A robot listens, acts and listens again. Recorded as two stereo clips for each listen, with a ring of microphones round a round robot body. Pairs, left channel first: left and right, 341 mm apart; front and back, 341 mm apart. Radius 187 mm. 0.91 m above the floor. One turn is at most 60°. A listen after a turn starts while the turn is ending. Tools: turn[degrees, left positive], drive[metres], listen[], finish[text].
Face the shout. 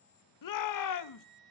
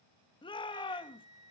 Thought: The shout: 75° left.
Action: turn[60]
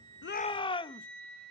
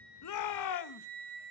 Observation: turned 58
Thought: The shout is now 15° left.
Action: turn[15]
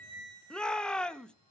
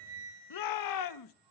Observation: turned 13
Action: finish[Found it: a shout, straight ahead, 1 to 2 m away.]